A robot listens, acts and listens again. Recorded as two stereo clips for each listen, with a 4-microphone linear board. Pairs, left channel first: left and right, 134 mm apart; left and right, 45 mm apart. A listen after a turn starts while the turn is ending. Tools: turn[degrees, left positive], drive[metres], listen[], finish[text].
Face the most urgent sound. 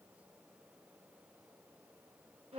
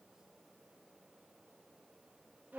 Action: listen[]
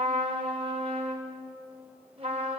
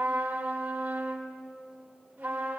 Action: listen[]
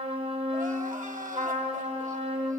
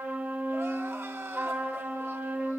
Action: turn[-90]
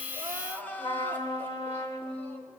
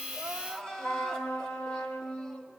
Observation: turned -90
Thought: So it is at 15° left.
Action: turn[15]
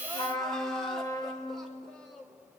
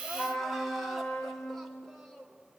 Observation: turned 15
Action: finish[Found it: crying, straight ahead.]